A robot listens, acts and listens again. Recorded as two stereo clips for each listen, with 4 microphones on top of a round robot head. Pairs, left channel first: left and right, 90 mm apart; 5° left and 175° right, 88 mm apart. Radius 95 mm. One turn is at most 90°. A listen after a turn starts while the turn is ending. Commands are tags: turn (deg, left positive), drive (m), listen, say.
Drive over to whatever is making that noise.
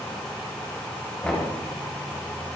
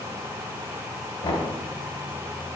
<drive m="1.0"/>
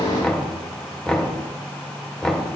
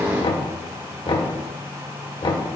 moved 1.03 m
<turn deg="10"/>
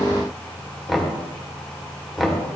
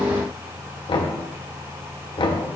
<drive m="1.0"/>
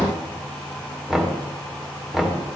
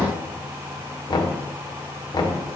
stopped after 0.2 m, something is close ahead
<say>I am next to the knocking.</say>